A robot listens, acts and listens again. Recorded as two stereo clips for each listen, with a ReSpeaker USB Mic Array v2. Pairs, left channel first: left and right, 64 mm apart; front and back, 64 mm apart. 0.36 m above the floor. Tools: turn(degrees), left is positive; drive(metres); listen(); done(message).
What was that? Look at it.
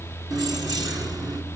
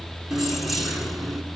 turn(degrees=-95)
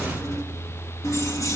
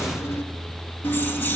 turn(degrees=60)
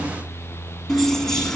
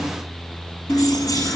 turn(degrees=10)
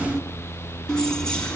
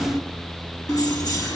turn(degrees=15)
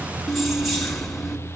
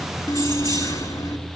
done("Found it: keys jangling, straight ahead, 2 to 4 m away.")